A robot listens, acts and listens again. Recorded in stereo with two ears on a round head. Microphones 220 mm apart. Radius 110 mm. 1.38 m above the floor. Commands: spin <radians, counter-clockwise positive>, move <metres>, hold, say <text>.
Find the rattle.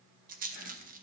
spin -0.61
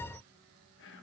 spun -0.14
hold
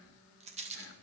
spin -0.44
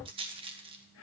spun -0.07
spin -0.35
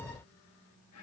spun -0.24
hold
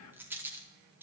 spin -0.17
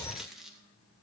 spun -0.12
say Found it: a rattle, straight ahead.